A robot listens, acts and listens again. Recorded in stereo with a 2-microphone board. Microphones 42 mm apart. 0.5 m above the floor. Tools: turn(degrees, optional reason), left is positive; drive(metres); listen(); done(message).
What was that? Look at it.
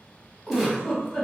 turn(degrees=30)
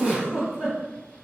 turn(degrees=-35, reason="So it is at 35° right.")
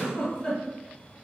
turn(degrees=10, reason="The giggle is now 10° left.")
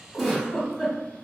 done("Found it: a giggle, straight ahead, 1 to 2 m away.")